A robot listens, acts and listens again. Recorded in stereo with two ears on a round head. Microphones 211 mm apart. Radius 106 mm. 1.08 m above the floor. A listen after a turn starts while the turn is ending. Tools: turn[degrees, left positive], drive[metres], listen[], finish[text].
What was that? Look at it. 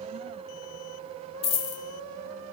Thought: The dropped coin: about 20° left or 160° left.
Action: turn[20]
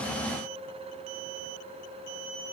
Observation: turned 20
Action: listen[]
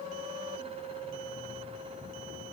Action: finish[I heard a dropped coin, but can't make it out now. It was about straight ahead or 140° left.]